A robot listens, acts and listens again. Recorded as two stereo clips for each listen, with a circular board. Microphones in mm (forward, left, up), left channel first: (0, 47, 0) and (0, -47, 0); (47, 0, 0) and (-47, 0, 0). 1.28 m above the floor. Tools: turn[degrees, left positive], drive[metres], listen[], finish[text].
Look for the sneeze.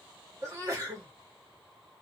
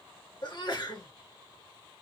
Thought: The sneeze: 35° right.
Action: turn[-35]
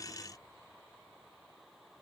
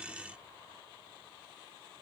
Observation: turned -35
Action: finish[Facing where the sneeze came from. I can't hear it now.]